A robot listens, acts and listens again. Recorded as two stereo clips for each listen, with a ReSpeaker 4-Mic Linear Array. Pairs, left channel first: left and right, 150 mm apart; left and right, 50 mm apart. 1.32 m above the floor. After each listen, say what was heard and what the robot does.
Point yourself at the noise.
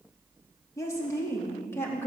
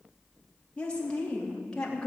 The woman speaking: about 15° left or 165° left. Turn 15° left.
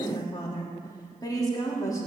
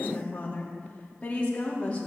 The woman speaking: about 20° left or 160° left. Turn 20° left.
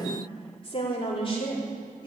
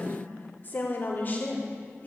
The woman speaking: about 35° left or 145° left. Turn 35° left.
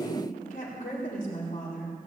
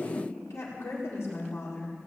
So it is at 115° left. Turn 115° left.
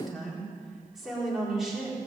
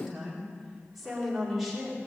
Facing the woman speaking, over 4 m away.